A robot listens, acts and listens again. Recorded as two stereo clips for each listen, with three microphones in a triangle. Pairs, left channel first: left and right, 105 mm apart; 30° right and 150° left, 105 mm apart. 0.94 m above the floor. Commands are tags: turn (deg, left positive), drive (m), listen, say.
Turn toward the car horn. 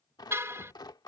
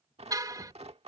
<turn deg="-155"/>
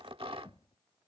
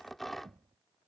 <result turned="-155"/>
<listen/>
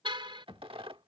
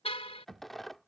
<turn deg="-50"/>
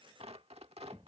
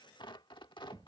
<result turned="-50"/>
<listen/>
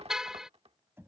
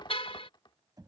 <say>Facing the car horn.</say>